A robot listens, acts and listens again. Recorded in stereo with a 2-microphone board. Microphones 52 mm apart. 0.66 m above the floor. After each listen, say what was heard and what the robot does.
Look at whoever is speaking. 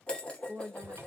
The woman speaking: about 45° right or 135° right. Turn 45° right.
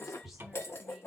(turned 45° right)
Keep listening.
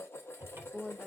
Found it: a woman speaking, straight ahead.